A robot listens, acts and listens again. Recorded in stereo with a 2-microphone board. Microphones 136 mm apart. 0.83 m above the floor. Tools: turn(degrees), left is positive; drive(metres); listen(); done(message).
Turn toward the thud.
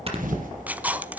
turn(degrees=-90)
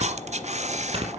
done("I heard a thud from this way, but can't make it out now.")